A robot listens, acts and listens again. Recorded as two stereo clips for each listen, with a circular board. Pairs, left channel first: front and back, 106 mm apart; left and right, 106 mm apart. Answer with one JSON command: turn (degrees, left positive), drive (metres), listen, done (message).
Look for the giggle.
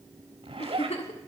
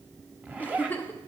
{"turn": 15}
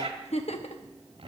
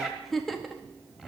{"done": "Found it: a giggle, straight ahead, under 1 m away."}